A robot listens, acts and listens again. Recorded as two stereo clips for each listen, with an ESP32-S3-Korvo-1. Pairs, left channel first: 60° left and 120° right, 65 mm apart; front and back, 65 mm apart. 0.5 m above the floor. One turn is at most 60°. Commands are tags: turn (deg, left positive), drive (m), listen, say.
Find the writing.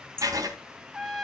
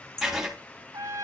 <turn deg="-60"/>
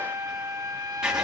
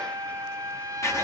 <turn deg="-45"/>
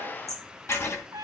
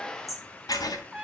<turn deg="15"/>
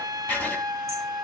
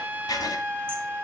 <say>Found it: writing, straight ahead, 2 to 4 m away.</say>